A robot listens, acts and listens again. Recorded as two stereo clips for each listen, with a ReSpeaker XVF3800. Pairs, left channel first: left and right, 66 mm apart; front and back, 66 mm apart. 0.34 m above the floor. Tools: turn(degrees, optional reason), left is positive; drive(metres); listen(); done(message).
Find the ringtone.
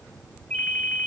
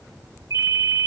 turn(degrees=160, reason="The ringtone: 160° left.")
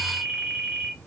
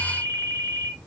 turn(degrees=-20, reason="The ringtone is now 20° right.")
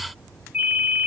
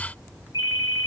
done("Facing the ringtone, 1 to 2 m away.")